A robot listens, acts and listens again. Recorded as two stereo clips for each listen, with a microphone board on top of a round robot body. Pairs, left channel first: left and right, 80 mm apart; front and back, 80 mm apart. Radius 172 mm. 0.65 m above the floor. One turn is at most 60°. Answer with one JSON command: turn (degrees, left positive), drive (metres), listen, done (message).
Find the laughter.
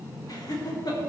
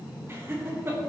{"turn": 60}
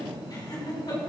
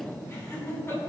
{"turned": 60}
{"turn": 60}
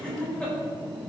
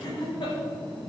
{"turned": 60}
{"turn": 15}
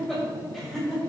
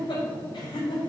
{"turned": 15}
{"done": "Facing the laughter."}